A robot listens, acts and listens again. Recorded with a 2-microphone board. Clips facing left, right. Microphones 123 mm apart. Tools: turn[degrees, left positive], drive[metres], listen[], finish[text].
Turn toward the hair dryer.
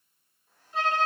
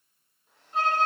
Action: turn[-90]
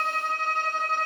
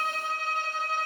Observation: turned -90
Action: listen[]
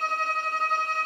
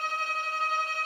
Action: listen[]
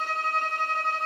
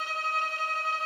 Action: finish[I heard a hair dryer from this way, but can't make it out now.]